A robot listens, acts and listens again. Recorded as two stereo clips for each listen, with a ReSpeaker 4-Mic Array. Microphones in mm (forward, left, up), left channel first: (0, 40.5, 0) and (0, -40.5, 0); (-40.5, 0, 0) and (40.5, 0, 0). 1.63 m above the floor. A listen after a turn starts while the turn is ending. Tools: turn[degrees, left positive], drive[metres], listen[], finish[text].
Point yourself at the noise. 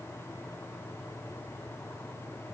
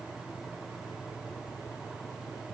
Action: listen[]
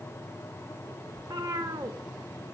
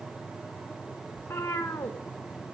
Thought: The cat meowing: 120° right.
Action: turn[-120]
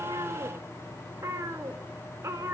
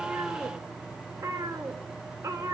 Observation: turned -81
Thought: The cat meowing is now 40° right.
Action: turn[-40]
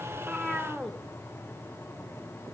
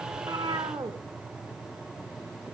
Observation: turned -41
Action: finish[Found it: a cat meowing, straight ahead.]